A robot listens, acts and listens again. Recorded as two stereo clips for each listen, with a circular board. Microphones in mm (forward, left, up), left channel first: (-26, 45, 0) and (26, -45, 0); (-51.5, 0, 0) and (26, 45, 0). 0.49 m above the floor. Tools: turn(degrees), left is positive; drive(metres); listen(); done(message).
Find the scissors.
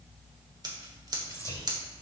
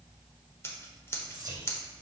turn(degrees=-95)
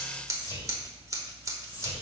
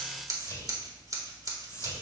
turn(degrees=-10)
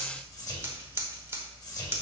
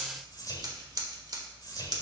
done("Found it: scissors, straight ahead, 1 to 2 m away.")